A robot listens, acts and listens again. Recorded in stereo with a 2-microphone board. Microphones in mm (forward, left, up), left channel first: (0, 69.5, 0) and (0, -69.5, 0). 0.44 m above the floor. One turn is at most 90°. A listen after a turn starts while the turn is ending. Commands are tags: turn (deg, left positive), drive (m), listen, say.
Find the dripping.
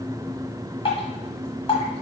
<turn deg="45"/>
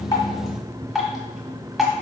<say>Found it: dripping, straight ahead.</say>